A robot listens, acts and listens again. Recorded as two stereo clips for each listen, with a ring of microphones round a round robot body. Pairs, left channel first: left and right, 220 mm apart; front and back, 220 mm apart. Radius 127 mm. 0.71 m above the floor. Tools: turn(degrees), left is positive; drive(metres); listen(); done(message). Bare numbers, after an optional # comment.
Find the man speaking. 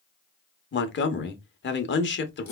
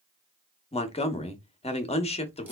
# The man speaking: 60° left.
turn(60)
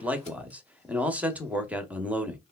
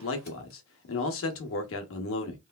done("Facing the man speaking, under 1 m away.")